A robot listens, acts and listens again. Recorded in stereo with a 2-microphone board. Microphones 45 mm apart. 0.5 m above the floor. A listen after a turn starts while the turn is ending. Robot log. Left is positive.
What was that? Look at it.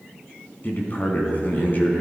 note: The man speaking: about 40° left or 140° left.
cmd yaw +40
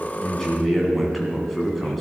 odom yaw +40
end: Facing the man speaking.